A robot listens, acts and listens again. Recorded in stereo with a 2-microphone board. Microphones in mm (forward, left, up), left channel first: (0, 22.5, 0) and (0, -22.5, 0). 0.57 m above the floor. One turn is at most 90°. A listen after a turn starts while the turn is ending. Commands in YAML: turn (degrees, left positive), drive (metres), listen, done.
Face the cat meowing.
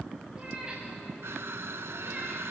turn: -20
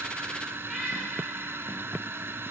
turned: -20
done: "Found it: a cat meowing, straight ahead, over 4 m away."